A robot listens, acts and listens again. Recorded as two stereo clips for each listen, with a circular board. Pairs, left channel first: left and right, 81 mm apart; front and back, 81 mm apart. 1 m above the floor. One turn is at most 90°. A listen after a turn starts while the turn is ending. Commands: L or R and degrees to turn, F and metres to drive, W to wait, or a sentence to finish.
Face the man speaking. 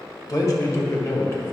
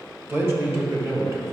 L90
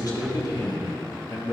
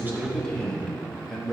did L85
L90
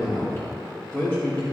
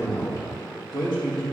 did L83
L25
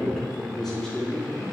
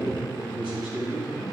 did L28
L10
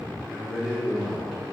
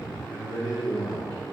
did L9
Found it: a man speaking, straight ahead.